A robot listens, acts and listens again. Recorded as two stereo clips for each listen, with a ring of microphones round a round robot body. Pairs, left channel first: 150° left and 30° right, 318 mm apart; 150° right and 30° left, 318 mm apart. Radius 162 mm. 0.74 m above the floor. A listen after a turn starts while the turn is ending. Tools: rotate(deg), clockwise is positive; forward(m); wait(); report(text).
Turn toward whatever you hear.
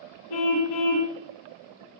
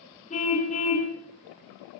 rotate(-140)
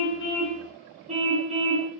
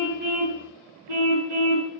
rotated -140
rotate(-40)
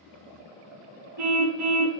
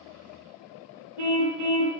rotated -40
rotate(-10)
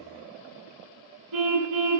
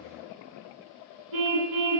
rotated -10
report("Found it: a car horn, straight ahead.")